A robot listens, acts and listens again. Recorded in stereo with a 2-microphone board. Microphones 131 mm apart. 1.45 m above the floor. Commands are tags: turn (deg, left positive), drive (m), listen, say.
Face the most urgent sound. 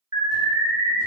<turn deg="-30"/>
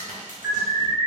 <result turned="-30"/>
<say>Facing the alarm.</say>